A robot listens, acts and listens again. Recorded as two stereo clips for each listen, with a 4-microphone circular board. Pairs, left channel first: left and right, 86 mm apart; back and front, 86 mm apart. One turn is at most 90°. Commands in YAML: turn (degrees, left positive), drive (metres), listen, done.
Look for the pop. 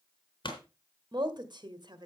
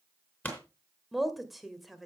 turn: 90
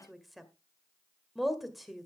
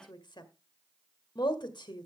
turn: 20
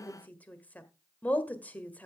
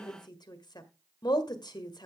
done: "Facing where the pop came from. I can't hear it now."